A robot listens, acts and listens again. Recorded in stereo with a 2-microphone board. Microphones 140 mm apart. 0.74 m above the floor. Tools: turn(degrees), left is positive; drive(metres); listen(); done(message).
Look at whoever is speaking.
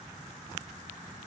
listen()
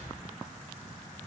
listen()
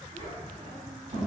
turn(degrees=-45)
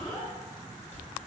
done("Found it: a child speaking, straight ahead, 1 to 2 m away.")